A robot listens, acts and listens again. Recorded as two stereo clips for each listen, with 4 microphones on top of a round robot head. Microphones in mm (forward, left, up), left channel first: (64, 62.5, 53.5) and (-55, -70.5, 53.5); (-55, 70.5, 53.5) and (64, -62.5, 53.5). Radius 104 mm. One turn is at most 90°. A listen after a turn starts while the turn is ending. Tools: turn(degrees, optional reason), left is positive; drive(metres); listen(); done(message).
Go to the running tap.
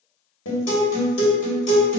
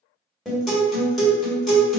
listen()
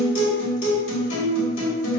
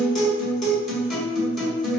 listen()
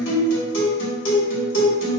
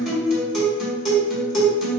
done("I can't make out a running tap to turn to.")